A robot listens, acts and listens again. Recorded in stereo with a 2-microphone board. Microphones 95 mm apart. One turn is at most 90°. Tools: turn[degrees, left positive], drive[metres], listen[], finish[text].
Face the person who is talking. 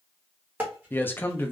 Thought: The man speaking: about 20° left or 160° left.
Action: turn[20]
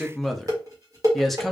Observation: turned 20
Action: finish[Facing the man speaking.]